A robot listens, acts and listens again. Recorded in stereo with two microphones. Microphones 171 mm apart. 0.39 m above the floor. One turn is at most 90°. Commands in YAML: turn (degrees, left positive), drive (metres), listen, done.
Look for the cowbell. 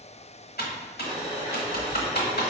listen: true
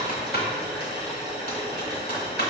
listen: true
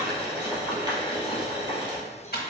done: "I can't make out a cowbell to turn to."